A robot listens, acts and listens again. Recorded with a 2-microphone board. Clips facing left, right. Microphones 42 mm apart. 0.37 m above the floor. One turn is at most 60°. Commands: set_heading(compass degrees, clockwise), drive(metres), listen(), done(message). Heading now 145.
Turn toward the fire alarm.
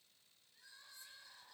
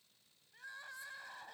listen()
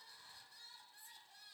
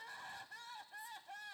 listen()
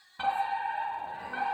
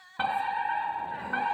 set_heading(175)
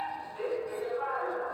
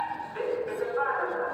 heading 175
set_heading(235)
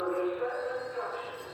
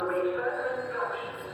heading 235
set_heading(295)
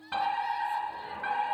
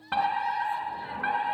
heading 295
set_heading(325)
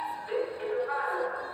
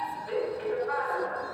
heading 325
done("Facing the fire alarm.")